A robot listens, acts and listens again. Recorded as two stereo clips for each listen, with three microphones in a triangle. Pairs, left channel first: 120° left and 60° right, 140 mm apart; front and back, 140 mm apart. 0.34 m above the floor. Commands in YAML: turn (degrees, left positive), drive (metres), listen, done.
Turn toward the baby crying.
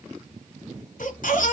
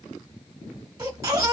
turn: 115
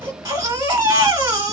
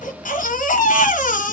done: "Found it: a baby crying, straight ahead."